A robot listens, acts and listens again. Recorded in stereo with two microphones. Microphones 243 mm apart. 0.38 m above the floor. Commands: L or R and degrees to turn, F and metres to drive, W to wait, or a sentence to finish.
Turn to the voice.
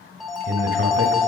R55
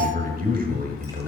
R45
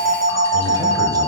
W
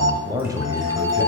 R20
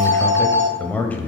L10
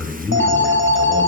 Found it: a man speaking, straight ahead.